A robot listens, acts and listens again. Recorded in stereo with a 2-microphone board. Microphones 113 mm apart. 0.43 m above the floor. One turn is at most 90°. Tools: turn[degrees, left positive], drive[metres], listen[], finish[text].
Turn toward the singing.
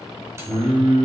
Action: turn[-30]
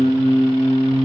Thought: So it is at 30° left.
Action: turn[30]
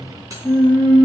Thought: The singing is now 10° left.
Action: turn[10]
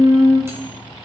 Action: finish[Found it: singing, straight ahead, over 4 m away.]